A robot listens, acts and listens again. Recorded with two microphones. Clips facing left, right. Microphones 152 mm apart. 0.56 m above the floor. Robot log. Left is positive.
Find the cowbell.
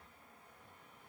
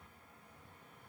cmd idle
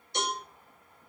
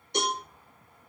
note: The cowbell: about 70° right or 110° right.
cmd yaw -70
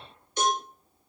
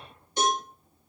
note: So it is at 35° right.
cmd yaw -35
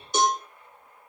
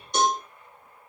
end: Found it: a cowbell, straight ahead, 1 to 2 m away.